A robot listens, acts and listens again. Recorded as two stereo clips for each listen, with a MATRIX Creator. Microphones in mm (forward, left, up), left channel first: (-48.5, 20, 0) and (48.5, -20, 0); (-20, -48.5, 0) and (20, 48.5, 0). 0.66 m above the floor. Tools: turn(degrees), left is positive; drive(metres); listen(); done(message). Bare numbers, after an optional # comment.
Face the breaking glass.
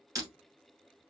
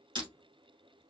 # The breaking glass: 30° left.
turn(30)
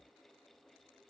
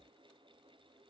done("Facing where the breaking glass came from. I can't hear it now.")